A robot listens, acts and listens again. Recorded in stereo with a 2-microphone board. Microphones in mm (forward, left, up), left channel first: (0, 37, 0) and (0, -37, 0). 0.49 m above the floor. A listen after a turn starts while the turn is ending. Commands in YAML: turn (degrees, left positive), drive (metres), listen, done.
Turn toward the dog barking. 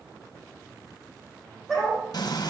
turn: -30
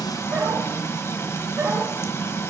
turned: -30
turn: -145
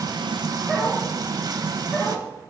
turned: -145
done: "Found it: a dog barking, straight ahead, over 4 m away."